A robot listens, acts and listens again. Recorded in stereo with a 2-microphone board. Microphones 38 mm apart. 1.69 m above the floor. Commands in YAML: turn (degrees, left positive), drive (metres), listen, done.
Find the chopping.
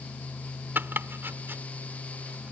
turn: -65
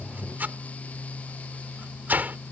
turn: -45
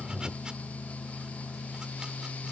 listen: true
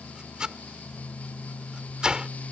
turn: -20
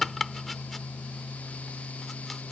done: "Found it: chopping, straight ahead."